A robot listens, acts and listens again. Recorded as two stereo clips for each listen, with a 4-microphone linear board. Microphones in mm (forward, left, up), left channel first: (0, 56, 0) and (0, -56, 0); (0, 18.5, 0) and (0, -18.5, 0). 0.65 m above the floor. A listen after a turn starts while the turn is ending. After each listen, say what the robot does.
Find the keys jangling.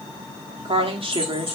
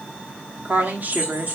Turn 50° right.
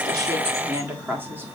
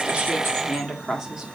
Keep listening.
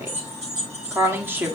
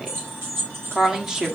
Turn 90° right.
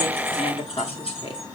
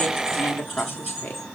Found it: keys jangling, straight ahead.